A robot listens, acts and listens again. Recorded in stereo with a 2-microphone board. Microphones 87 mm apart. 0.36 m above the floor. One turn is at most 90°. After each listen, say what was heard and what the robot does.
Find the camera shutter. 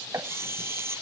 The camera shutter: about 30° right or 150° right. Turn 30° right.
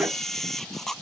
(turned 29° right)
Facing the camera shutter.